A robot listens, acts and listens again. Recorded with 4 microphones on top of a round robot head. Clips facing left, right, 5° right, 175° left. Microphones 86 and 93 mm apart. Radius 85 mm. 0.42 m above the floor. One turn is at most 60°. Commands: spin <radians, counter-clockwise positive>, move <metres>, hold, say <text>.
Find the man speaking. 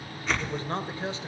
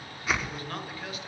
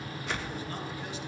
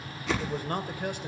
spin 1.05
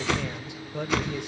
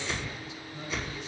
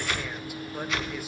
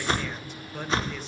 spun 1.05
spin 1.05
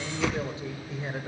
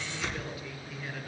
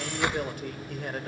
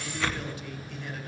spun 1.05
spin 0.52
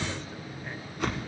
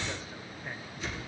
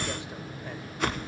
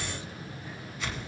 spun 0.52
hold
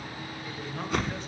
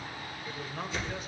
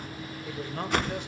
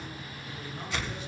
say Found it: a man speaking, straight ahead.